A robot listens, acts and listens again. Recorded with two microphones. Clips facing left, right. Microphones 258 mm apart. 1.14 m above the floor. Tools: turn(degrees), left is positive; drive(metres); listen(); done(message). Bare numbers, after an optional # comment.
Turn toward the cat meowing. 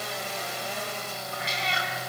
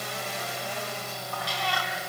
# The cat meowing: about 20° left or 160° left.
turn(20)
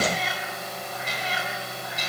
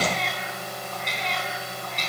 turn(30)
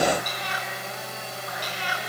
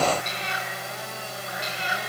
# So it is at 25° right.
turn(-25)
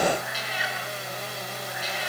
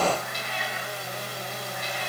done("Facing the cat meowing.")